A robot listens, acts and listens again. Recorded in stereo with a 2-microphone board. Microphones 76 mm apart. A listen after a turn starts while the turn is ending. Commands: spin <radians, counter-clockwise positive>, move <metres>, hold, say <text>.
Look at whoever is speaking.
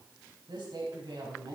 spin -1.57
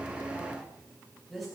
say Facing the woman speaking.